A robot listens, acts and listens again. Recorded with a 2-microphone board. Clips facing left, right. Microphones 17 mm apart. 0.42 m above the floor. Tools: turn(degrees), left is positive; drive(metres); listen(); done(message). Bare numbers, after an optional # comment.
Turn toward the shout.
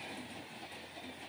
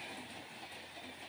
listen()
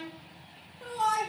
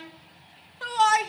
# The shout: about 55° right or 125° right.
turn(-55)
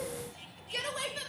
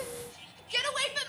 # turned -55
# So it is at 50° right.
turn(-50)
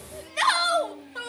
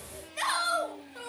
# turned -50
# The shout is now 30° left.
turn(30)
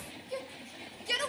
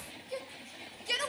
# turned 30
# The shout is now 10° right.
turn(-10)
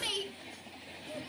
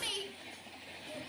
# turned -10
done("Found it: a shout, straight ahead.")